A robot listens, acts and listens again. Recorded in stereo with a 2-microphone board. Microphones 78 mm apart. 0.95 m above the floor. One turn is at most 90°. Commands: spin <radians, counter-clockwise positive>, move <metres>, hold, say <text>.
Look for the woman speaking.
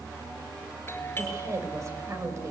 spin -0.70
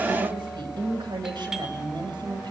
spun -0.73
spin -1.57
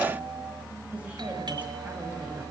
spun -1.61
spin -0.26
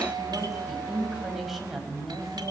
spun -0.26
say Facing the woman speaking.